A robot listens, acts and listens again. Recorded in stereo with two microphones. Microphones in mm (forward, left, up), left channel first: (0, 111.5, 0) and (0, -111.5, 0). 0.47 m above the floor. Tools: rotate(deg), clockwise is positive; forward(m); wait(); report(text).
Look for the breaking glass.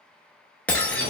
rotate(-30)
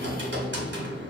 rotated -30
wait()
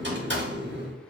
report("I heard breaking glass, but can't make it out now. It was about 25° right or 145° left.")